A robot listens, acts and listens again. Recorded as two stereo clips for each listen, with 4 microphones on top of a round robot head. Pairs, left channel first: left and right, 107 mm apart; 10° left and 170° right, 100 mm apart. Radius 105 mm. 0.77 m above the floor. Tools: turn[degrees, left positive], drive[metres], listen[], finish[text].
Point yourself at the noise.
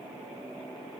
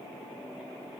Action: listen[]
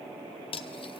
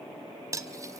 Thought: The cutlery clinking: 130° left.
Action: turn[130]
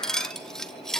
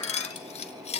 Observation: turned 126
Action: finish[Facing the cutlery clinking.]